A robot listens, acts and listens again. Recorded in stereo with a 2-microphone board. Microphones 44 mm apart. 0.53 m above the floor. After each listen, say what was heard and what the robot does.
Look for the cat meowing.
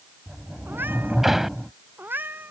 The cat meowing: about 55° right or 125° right. Turn 55° right.
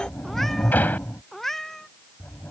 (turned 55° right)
Found it: a cat meowing, straight ahead.